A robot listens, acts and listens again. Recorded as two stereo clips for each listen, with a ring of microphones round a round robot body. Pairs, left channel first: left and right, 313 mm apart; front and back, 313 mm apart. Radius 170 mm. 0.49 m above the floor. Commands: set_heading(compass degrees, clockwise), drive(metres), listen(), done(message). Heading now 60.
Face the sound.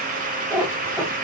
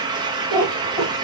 done("Found it: a cat meowing, straight ahead.")